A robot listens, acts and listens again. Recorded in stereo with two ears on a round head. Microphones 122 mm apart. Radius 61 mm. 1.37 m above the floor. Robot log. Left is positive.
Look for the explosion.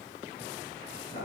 cmd idle
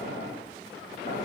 cmd idle
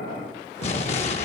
note: The explosion: about 50° left or 130° left.
cmd yaw +50
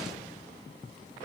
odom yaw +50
cmd idle
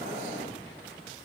end: I heard an explosion, but can't make it out now. It was about straight ahead or 80° left.